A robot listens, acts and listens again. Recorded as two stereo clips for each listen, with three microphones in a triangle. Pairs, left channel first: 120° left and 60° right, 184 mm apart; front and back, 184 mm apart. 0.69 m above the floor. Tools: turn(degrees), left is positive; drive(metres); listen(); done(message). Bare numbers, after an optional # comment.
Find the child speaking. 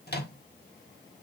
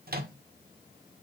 listen()
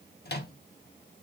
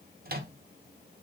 listen()
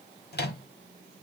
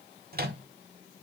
done("I can't make out a child speaking, only a microwave.")